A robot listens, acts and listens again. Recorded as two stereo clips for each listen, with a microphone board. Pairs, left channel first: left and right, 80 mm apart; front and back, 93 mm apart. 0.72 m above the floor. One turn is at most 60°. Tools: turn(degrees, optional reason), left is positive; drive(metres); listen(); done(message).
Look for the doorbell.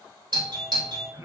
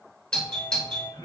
turn(degrees=-60, reason="The doorbell: 80° right.")
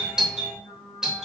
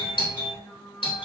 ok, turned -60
turn(degrees=-10, reason="The doorbell is now 10° right.")
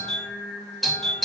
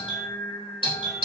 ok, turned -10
done("Found it: a doorbell, straight ahead.")